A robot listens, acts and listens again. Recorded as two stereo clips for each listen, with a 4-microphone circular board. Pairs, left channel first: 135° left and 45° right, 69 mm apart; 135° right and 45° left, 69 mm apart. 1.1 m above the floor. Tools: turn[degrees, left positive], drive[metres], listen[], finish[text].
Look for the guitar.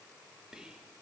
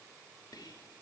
Action: listen[]
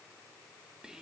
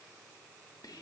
Action: listen[]
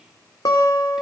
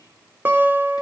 Thought: The guitar: 110° left.
Action: turn[110]
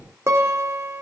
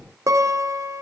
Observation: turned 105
Action: finish[Facing the guitar, 2 to 4 m away.]